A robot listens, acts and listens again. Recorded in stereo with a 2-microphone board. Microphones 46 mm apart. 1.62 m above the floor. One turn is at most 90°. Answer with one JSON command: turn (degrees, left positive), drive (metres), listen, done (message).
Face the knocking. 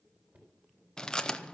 {"turn": -35}
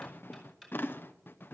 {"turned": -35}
{"done": "Found it: knocking, straight ahead."}